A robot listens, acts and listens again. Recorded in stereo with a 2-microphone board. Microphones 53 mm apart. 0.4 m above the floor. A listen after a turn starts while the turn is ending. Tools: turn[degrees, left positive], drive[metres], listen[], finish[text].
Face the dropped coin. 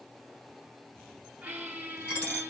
Thought: The dropped coin: about 40° left or 140° left.
Action: turn[40]
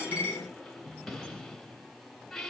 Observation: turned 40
Action: listen[]
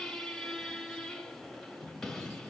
Action: finish[I heard a dropped coin, but can't make it out now. It was about straight ahead or 100° left.]